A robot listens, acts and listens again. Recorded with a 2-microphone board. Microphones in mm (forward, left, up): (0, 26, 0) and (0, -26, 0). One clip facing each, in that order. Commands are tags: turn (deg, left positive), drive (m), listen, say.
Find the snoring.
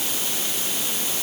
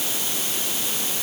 <listen/>
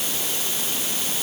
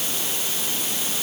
<listen/>
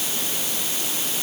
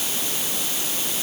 <say>I can't make out snoring to turn to.</say>